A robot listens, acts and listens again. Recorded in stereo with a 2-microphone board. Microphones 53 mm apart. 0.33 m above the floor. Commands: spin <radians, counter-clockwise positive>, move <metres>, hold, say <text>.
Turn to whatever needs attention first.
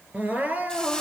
spin -0.52
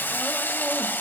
hold
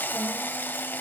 hold
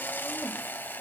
say I heard crying, but can't make it out now. It was about straight ahead or 120° right.